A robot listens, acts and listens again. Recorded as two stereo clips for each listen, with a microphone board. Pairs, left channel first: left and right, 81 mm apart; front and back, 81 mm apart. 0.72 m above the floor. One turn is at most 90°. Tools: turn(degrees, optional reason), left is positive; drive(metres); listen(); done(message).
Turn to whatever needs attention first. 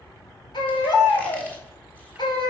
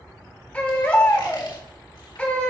turn(degrees=75, reason="The baby crying: 75° left.")
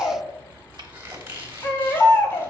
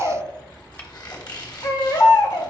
turn(degrees=30, reason="The baby crying is now 30° left.")
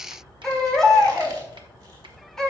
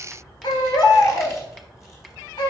done("Facing the baby crying.")